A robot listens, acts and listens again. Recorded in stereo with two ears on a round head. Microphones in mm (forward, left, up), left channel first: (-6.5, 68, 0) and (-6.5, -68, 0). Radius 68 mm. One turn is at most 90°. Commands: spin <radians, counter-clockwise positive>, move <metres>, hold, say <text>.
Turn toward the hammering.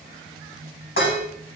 hold
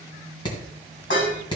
spin 0.52
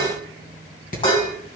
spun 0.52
spin 1.57
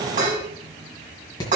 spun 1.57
spin 0.52
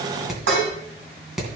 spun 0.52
say Found it: hammering, straight ahead, 2 to 4 m away.